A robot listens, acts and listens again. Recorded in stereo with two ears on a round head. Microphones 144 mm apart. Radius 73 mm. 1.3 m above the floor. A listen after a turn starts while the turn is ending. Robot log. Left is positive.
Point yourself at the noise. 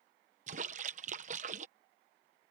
note: The splash: about 45° right or 135° right.
cmd yaw -45
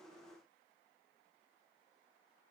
cmd idle
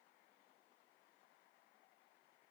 end: I heard a splash, but can't make it out now. It was about straight ahead or 90° right.